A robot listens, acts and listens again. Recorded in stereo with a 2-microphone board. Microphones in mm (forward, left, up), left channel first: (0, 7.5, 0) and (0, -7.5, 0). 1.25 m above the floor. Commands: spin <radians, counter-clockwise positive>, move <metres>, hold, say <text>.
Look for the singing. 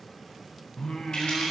spin 1.05
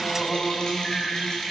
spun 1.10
spin 0.70
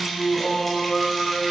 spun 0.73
spin 0.44
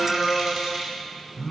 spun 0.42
spin 0.17
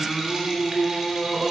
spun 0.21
say Found it: singing, straight ahead, 2 to 4 m away.